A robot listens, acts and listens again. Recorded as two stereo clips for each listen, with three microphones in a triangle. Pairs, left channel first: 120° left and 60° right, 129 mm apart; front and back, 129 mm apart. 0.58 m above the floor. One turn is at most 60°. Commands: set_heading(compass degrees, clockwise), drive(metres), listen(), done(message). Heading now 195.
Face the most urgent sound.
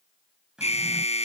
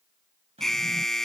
set_heading(135)
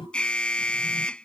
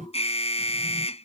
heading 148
set_heading(108)
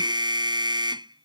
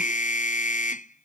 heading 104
done("Facing the alarm.")